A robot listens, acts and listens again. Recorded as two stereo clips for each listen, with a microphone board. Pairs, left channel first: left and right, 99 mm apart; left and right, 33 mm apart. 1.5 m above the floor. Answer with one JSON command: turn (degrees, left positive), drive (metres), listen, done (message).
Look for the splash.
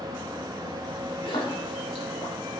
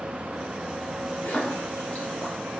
{"turn": 60}
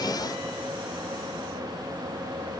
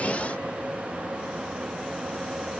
{"listen": true}
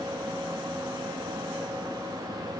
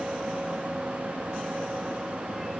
{"done": "I heard a splash, but can't make it out now. It was about straight ahead or 60° left."}